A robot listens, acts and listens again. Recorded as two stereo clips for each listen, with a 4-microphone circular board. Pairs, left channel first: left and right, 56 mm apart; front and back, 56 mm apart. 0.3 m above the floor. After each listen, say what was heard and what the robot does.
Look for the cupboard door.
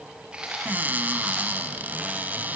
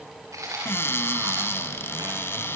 The cupboard door: 35° right. Turn 35° right.
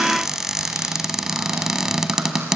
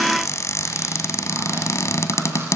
The cupboard door is now 10° right. Turn 10° right.
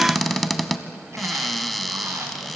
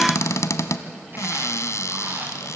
Facing the cupboard door.